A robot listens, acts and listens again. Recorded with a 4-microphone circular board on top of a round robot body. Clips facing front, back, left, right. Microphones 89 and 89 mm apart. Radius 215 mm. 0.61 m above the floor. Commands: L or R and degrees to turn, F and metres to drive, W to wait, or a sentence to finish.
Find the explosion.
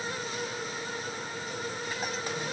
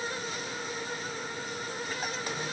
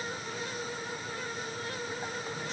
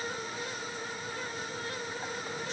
W
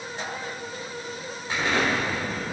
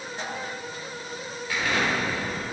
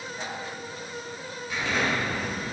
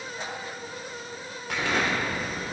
R65
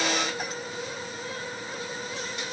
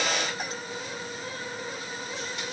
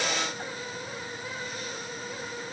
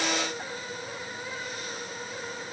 I heard an explosion from this way, but can't make it out now.